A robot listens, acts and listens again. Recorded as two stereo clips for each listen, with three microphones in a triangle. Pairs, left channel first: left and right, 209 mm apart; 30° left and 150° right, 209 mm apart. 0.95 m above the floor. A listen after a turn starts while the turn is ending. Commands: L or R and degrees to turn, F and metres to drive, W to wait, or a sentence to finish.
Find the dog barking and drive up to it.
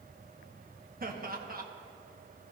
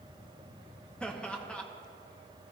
W
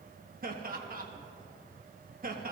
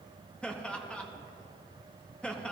W
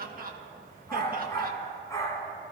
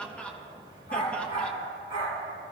L15
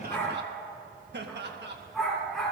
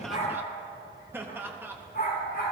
F1.0
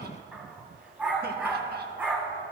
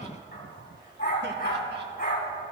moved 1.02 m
F1.0
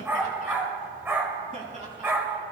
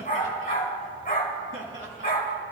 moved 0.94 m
R10
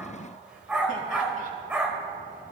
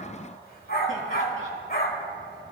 F1.0
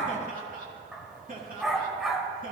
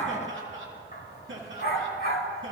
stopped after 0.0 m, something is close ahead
Arrived at the dog barking, straight ahead.